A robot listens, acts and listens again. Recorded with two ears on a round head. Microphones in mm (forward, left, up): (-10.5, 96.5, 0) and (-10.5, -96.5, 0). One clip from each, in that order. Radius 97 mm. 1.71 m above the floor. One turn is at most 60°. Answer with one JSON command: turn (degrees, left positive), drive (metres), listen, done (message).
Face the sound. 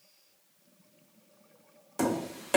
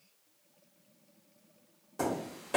{"turn": 35}
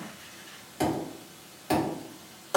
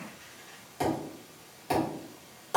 {"done": "Facing the tapping."}